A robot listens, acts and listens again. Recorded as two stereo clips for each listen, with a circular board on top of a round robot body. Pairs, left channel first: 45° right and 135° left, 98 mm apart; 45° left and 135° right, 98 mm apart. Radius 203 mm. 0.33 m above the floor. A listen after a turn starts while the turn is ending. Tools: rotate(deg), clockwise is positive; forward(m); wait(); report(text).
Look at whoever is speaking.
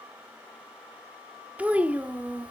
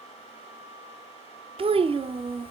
rotate(150)
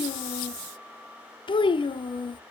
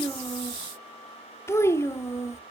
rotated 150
rotate(15)
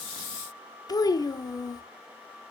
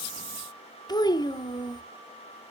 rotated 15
report("Facing the child speaking, under 1 m away.")